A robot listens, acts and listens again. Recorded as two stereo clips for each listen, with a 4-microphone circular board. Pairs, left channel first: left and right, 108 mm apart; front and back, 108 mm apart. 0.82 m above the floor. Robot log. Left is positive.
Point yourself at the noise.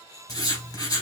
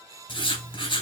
note: The writing: 35° left.
cmd yaw +35
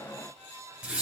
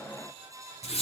note: The writing is now 15° right.
cmd yaw -15
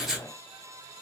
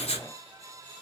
end: Facing the writing, 2 to 4 m away.